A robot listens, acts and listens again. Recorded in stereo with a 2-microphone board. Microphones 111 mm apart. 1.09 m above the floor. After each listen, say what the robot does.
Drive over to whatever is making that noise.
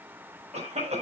Turn 90° right.
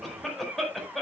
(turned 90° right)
Drive 1.0 m forward.
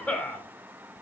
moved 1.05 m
Turn 15° left.
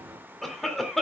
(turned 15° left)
Drive 1.0 m forward.
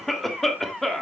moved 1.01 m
Drive 1.0 m forward.
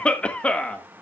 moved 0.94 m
Turn 10° left.
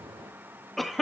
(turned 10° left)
Drive 1.0 m forward.
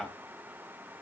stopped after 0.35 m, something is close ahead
Arrived at the cough, straight ahead.